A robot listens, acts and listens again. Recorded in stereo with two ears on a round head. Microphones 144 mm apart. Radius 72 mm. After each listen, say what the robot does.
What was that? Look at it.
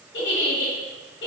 Turn 90° left.
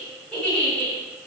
Found it: a giggle, straight ahead, 1 to 2 m away.